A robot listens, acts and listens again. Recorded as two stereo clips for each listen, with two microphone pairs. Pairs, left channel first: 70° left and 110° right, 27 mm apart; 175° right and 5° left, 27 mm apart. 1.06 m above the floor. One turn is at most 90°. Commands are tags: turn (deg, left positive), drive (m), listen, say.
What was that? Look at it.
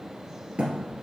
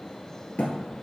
<turn deg="-90"/>
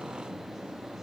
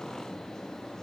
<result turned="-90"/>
<turn deg="-65"/>
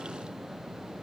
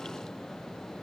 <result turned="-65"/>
<say>Facing where the thud came from. I can't hear it now.</say>